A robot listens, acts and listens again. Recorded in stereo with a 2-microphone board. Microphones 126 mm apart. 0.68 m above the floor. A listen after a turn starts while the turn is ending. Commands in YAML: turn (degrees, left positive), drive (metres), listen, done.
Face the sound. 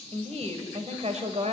turn: -75
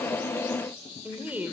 turn: -15
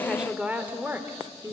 turn: -25
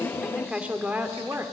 turn: -25
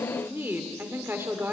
turn: -20
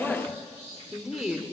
done: "Facing the woman speaking, 1 to 2 m away."